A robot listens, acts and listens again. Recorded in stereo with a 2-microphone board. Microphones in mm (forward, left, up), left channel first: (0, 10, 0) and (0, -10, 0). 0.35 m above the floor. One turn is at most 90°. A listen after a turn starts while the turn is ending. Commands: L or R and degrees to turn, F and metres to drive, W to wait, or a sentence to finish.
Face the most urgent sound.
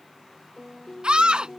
R55
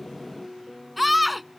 Facing the scream.